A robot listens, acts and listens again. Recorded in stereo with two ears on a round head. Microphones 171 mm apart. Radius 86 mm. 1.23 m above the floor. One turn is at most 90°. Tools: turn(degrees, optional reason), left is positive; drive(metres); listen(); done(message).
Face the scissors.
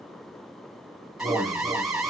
listen()
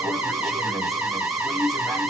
listen()
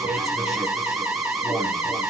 done("I can't make out scissors, only an alarm.")